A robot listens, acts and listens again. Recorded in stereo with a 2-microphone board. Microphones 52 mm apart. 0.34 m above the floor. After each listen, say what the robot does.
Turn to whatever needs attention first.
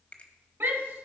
Turn 50° right.
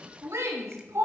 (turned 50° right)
Turn 75° right.
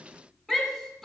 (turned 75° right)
Turn 10° left.
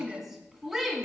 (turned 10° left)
Facing the shout.